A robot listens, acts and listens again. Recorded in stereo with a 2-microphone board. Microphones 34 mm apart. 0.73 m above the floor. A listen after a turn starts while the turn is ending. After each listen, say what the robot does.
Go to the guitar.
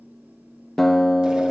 Turn 30° left.
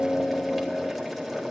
Turn 140° left.
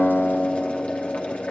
Drive 1.0 m forward.
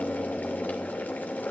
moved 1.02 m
Keep listening.
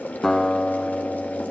Turn 15° left.
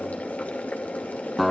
Drive 1.0 m forward.
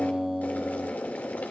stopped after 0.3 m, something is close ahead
I am next to the guitar.